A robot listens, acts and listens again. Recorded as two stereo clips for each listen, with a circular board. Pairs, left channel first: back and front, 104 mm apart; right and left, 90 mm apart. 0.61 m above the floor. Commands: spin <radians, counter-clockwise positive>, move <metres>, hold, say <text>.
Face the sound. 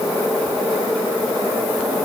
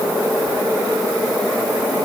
hold
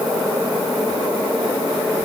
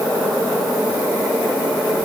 hold
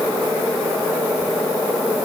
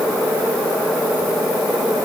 say I can't make out anything.